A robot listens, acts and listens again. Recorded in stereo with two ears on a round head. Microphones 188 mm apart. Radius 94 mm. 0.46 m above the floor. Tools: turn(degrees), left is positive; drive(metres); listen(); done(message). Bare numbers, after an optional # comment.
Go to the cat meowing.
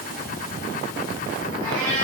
turn(-90)
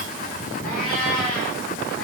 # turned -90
drive(1.0)
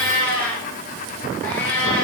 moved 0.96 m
drive(1.0)
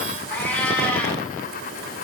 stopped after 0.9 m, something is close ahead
done("Arrived at the cat meowing, straight ahead.")